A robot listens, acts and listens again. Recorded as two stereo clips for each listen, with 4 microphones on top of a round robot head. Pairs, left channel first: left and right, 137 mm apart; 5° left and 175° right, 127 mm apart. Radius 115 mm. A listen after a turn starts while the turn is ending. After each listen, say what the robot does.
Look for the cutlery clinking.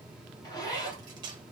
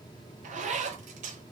Turn 150° right.
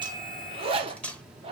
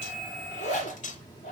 Turn 10° left.
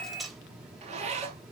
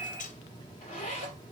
Facing the cutlery clinking, under 1 m away.